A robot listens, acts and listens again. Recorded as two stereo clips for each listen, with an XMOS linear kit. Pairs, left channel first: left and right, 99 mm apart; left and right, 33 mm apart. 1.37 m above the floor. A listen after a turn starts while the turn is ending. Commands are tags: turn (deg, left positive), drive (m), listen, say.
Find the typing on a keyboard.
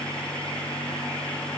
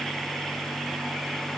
<listen/>
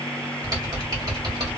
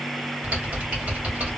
<turn deg="-40"/>
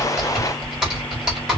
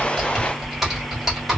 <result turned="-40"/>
<say>Found it: typing on a keyboard, straight ahead, 1 to 2 m away.</say>